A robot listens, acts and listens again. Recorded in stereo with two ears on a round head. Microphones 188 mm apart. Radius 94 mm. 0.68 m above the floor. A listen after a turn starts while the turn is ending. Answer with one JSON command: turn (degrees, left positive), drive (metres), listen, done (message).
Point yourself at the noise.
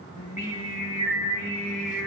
{"turn": 45}
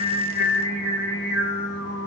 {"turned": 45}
{"turn": 65}
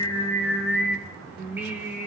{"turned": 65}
{"turn": -15}
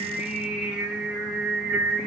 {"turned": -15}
{"done": "Found it: singing, straight ahead."}